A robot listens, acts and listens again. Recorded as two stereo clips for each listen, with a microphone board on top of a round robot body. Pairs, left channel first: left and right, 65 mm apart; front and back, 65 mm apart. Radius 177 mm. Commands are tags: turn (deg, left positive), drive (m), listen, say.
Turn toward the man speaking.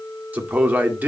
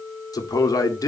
<turn deg="-25"/>
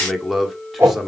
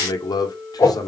<say>Facing the man speaking, 2 to 4 m away.</say>